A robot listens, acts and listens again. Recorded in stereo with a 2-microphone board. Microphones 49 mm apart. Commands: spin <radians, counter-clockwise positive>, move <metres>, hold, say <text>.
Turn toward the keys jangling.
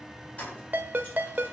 spin 0.52
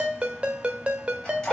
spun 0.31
spin 0.35
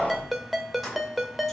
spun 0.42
say Found it: keys jangling, straight ahead.